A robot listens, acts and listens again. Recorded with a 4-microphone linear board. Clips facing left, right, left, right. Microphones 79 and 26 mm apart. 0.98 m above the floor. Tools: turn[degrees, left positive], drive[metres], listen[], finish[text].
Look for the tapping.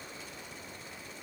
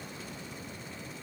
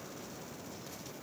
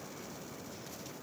Action: listen[]
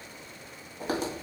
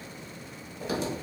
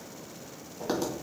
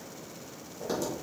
Thought: The tapping: about 50° left or 130° left.
Action: turn[50]
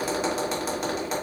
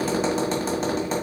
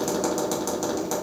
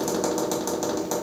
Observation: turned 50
Action: finish[Facing the tapping, 1 to 2 m away.]